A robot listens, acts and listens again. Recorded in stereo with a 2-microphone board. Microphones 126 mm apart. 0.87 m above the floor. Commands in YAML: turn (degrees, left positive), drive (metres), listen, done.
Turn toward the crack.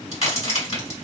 turn: 55
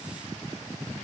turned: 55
listen: true
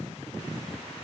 done: "I heard a crack, but can't make it out now. It was about straight ahead or 70° left."